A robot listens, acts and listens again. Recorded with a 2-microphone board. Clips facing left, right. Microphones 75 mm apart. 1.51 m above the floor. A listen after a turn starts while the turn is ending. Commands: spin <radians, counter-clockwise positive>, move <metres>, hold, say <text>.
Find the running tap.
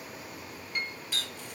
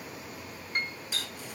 spin -0.52
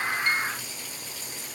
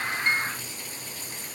hold
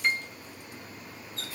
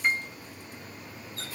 spin -2.36
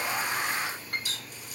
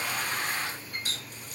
spin -0.79
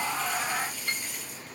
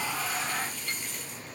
hold
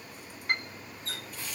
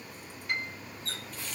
spin 0.17
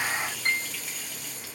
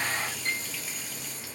say Found it: a running tap, straight ahead, 1 to 2 m away.